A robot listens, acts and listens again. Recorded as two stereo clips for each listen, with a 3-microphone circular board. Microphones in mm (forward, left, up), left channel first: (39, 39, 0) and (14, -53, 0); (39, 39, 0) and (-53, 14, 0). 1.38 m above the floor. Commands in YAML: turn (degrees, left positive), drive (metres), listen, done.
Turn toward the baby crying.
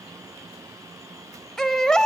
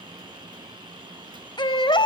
turn: -10
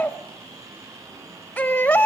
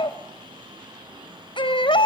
done: "Facing the baby crying."